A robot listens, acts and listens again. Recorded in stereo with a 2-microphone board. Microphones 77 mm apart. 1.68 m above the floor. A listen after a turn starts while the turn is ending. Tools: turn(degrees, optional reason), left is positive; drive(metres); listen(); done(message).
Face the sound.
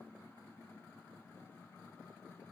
listen()
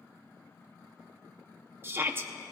turn(degrees=-30, reason="The shout: about 30° right or 150° right.")
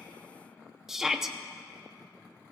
done("Found it: a shout, straight ahead, under 1 m away.")